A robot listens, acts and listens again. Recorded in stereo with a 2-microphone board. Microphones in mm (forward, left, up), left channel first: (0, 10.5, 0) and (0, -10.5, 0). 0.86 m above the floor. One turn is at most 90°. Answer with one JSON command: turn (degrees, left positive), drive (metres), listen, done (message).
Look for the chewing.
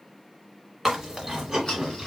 {"turn": -15}
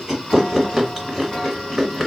{"done": "Facing the chewing."}